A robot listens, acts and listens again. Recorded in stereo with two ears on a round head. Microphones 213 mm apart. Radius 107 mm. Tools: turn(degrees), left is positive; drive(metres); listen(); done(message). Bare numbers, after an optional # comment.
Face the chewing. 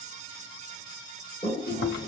# The chewing: about 40° left or 140° left.
turn(40)
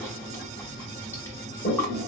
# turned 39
# So it is at 10° left.
turn(10)
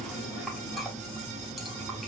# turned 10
done("Facing the chewing.")